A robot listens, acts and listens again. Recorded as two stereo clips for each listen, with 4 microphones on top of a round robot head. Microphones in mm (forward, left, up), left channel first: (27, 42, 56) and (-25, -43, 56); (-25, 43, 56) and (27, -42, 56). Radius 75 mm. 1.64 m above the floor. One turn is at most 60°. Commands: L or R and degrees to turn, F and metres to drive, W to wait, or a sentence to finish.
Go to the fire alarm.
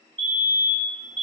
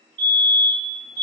R60
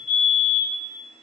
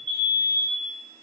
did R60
R45
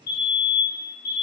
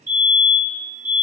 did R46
F1.0
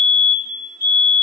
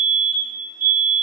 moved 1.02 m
L10
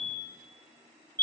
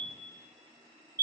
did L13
F1.0
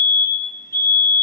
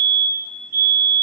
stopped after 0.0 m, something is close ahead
I am next to the fire alarm.